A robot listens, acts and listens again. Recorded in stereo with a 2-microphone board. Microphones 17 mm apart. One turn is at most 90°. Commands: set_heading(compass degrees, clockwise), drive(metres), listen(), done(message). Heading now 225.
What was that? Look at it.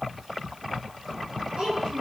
set_heading(315)
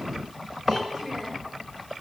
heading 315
done("Found it: a child speaking, straight ahead.")